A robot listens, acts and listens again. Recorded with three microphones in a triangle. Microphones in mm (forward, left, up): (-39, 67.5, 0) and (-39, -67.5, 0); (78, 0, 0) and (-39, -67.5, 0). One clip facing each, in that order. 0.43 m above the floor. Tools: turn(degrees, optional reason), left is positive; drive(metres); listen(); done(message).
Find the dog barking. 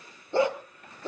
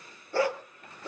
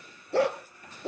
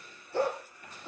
turn(degrees=25, reason="The dog barking: 25° left.")
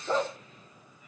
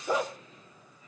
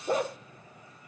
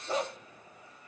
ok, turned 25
turn(degrees=-10, reason="The dog barking is now 10° right.")
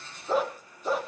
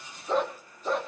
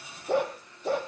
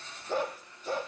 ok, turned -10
done("Facing the dog barking, 2 to 4 m away.")